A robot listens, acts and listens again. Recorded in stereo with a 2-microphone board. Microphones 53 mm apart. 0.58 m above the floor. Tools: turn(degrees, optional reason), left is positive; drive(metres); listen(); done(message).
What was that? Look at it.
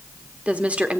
turn(degrees=-25, reason="The woman speaking: about 25° right or 155° right.")
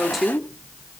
done("Facing the woman speaking, 1 to 2 m away.")